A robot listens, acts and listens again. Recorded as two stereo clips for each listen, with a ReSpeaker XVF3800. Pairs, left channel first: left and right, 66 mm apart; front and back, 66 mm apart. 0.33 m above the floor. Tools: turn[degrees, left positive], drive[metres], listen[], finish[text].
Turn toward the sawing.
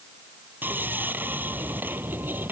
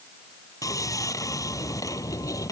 Thought: The sawing: 30° right.
Action: turn[-30]
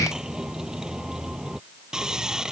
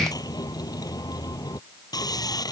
Thought: The sawing is now 10° right.
Action: turn[-10]
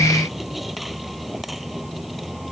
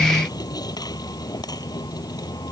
Action: finish[Facing the sawing.]